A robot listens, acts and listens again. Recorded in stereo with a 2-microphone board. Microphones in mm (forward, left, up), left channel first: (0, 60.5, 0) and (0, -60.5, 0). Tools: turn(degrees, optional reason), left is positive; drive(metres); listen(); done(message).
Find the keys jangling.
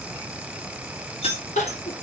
turn(degrees=55, reason="The keys jangling: about 55° left or 125° left.")
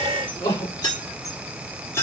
turn(degrees=20, reason="So it is at 20° left.")
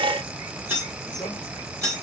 turn(degrees=-25, reason="The keys jangling is now 25° right.")
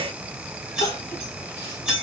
done("Facing the keys jangling.")